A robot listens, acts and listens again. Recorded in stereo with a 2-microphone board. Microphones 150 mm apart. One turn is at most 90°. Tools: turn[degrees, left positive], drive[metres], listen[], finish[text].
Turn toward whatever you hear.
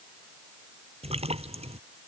Thought: The splash: about 40° right or 140° right.
Action: turn[-40]
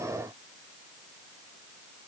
Action: listen[]
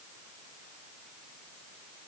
Action: finish[I heard a splash, but can't make it out now. It was about straight ahead or 100° right.]